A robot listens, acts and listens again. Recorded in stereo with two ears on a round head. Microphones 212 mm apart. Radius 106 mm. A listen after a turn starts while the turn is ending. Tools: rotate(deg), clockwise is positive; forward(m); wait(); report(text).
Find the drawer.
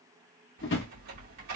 rotate(-50)
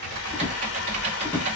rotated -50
rotate(-10)
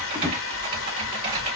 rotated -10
wait()
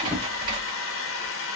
wait()
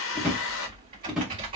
report("Found it: a drawer, straight ahead, 1 to 2 m away.")